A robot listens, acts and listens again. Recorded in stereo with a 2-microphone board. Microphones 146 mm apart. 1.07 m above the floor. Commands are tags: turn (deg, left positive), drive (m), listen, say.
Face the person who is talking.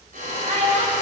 <turn deg="-50"/>
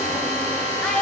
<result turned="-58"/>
<say>Facing the child speaking, 2 to 4 m away.</say>